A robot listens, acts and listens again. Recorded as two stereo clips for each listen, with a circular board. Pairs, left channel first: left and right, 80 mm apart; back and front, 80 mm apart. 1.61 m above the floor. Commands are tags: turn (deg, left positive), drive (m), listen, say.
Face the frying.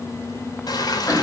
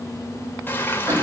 <turn deg="115"/>
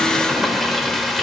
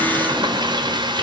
<say>Found it: frying, straight ahead, 2 to 4 m away.</say>